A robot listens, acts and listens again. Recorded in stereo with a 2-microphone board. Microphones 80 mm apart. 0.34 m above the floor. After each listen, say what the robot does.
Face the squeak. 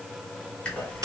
Turn 15° left.
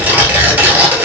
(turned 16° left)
Keep listening.
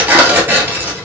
Keep listening.
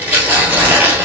I heard a squeak, but can't make it out now. It was about straight ahead or 150° left.